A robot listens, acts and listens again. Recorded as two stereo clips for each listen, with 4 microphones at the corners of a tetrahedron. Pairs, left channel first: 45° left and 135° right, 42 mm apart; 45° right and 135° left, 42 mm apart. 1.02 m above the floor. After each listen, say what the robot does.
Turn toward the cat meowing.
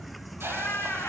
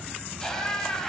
Found it: a cat meowing, straight ahead, 2 to 4 m away.